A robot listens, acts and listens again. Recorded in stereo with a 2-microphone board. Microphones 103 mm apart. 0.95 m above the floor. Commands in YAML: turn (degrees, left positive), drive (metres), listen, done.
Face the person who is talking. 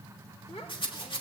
turn: 70
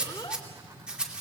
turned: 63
turn: 45
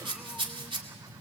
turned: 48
listen: true
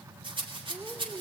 done: "Found it: a child speaking, straight ahead, 1 to 2 m away."